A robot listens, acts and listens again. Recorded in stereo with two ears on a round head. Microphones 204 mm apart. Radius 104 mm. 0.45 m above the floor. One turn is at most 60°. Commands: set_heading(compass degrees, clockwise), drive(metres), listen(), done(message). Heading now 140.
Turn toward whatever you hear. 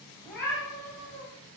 set_heading(115)
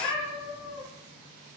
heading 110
set_heading(50)
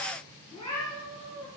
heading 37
set_heading(27)
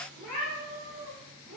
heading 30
done("Found it: a cat meowing, straight ahead.")